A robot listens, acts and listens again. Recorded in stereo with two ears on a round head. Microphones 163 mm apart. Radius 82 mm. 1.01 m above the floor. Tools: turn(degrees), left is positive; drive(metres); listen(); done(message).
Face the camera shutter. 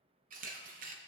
turn(degrees=-45)
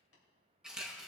done("Found it: a camera shutter, straight ahead, under 1 m away.")